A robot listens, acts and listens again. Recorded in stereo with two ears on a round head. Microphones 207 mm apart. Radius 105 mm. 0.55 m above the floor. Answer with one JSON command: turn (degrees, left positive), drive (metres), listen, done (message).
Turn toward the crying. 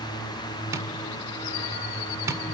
{"listen": true}
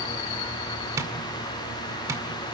{"listen": true}
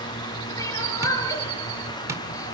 {"turn": 30}
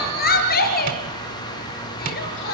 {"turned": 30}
{"turn": 135}
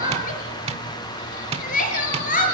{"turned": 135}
{"turn": 35}
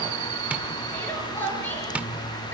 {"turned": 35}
{"turn": 10}
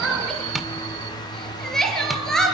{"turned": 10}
{"done": "Found it: crying, straight ahead, over 4 m away."}